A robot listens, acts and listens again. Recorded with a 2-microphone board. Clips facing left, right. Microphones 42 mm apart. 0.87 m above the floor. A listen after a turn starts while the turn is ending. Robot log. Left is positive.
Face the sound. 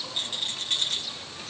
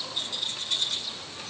note: The rattle: about 50° left or 130° left.
cmd yaw +50
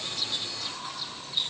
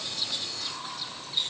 end: Facing the rattle.